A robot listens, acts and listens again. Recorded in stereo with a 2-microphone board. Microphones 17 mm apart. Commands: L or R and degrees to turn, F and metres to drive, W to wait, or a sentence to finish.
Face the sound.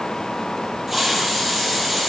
R20
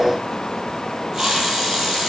R140
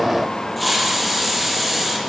Facing the hiss, over 4 m away.